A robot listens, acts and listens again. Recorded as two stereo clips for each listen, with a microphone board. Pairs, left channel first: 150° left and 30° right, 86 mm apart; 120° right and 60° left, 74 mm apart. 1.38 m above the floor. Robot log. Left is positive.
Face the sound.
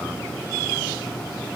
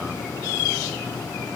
cmd idle
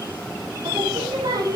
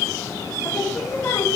note: The singing: 65° right.
cmd yaw -65
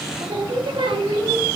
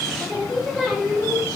note: The singing is now 30° right.
cmd yaw -30
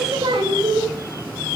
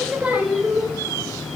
note: The singing is now 15° right.
cmd yaw -15
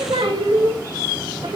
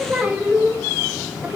note: The singing is now 10° right.
cmd yaw -10
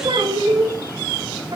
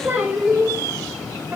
end: Facing the singing.